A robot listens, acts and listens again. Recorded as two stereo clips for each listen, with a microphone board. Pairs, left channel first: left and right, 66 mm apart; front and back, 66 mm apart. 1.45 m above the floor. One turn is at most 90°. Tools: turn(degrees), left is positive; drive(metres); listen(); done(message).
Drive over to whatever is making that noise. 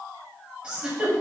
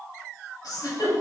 turn(degrees=-15)
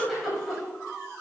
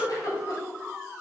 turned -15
drive(metres=1.0)
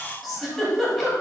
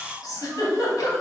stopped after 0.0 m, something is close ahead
done("Blocked. The giggle is further on, straight ahead.")